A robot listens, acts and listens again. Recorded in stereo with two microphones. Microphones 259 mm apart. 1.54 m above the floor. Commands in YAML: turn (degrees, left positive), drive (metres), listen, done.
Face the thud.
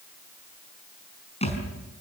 turn: 25
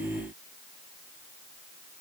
listen: true
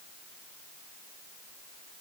done: "I heard a thud, but can't make it out now. It was about straight ahead or 130° left."